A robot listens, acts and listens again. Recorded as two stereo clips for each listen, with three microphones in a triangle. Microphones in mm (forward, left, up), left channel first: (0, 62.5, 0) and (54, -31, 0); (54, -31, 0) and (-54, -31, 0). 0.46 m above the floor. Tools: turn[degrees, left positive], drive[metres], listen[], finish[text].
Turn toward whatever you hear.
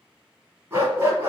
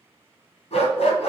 Action: finish[Facing the dog barking.]